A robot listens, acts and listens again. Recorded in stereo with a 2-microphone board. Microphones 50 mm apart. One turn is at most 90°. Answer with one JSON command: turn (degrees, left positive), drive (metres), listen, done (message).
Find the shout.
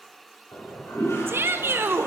{"turn": -50}
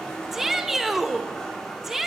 {"done": "Facing the shout."}